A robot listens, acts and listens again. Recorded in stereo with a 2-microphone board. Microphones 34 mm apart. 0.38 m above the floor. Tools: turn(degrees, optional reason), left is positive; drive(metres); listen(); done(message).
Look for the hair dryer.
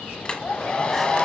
turn(degrees=35, reason="The hair dryer: about 35° left or 145° left.")
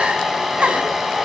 done("Facing the hair dryer, 1 to 2 m away.")